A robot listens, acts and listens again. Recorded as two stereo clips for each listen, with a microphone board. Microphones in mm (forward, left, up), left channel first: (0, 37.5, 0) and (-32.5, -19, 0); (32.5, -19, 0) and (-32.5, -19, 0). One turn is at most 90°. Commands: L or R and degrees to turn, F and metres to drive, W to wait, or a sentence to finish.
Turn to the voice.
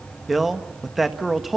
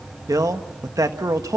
L90
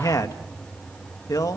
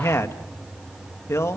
L40
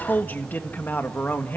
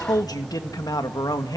Found it: a man speaking, straight ahead.